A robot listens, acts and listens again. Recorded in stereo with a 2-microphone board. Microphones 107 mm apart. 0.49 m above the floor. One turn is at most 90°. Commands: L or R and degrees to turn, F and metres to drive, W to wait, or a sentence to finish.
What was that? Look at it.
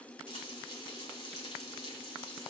L60
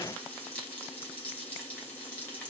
L15
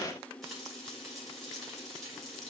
Facing the frying.